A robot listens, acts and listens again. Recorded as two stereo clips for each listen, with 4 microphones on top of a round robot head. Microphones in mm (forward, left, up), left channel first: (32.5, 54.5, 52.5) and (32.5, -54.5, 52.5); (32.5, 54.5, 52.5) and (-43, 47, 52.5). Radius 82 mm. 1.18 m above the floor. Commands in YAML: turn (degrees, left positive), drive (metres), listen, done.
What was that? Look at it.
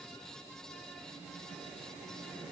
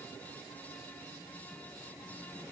listen: true
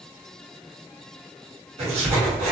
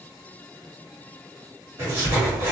turn: -110
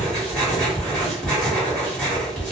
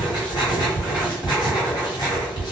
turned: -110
turn: 10
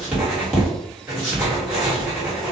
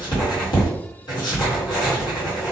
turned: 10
done: "Found it: writing, straight ahead."